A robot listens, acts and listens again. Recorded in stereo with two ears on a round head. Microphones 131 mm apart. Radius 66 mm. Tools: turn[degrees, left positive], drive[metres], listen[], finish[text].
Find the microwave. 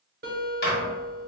Thought: The microwave: about 70° left or 110° left.
Action: turn[70]
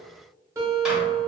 Action: listen[]
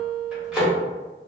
Action: finish[Found it: a microwave, straight ahead, 1 to 2 m away.]